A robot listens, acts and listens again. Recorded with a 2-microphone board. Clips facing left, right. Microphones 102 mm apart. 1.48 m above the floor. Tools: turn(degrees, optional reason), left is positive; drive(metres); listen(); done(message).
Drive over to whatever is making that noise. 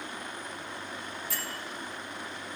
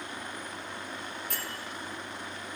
turn(degrees=-60, reason="The bell: about 60° right or 120° right.")
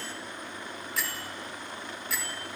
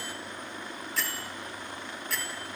drive(metres=1.0)
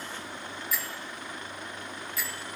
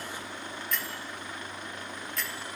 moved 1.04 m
drive(metres=1.0)
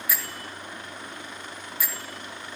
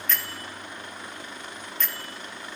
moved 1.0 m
turn(degrees=10, reason="The bell is now 10° left.")
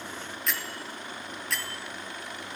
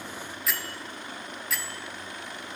drive(metres=1.0)
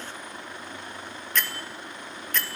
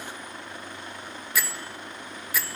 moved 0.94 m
turn(degrees=-10, reason="The bell is now 10° right.")
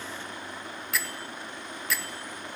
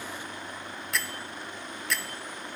drive(metres=1.0)
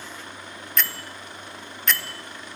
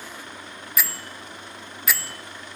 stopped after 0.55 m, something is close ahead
done("Arrived at the bell, straight ahead.")